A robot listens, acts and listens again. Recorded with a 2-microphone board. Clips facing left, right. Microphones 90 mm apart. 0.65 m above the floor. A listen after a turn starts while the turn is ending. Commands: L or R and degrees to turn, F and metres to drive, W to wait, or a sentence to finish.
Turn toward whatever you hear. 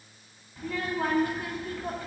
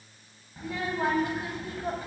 R25
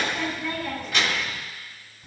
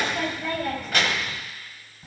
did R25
R130
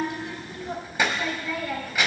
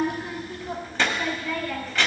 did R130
L10
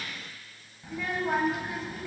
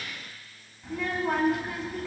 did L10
Found it: a child speaking, straight ahead, 2 to 4 m away.